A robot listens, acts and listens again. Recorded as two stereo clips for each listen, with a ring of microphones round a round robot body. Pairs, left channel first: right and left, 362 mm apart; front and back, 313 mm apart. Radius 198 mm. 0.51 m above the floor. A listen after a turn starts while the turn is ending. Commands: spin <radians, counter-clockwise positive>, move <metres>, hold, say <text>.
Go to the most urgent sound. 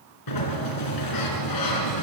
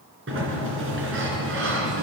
hold
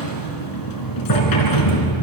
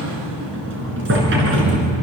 hold
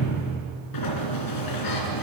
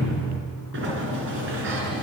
say I can't make out anything urgent to turn to.